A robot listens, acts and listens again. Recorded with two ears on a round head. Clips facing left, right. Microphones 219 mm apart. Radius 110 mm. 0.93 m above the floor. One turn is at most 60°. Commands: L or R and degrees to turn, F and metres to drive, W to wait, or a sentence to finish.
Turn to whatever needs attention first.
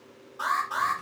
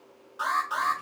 R15
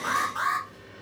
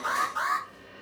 Facing the alarm.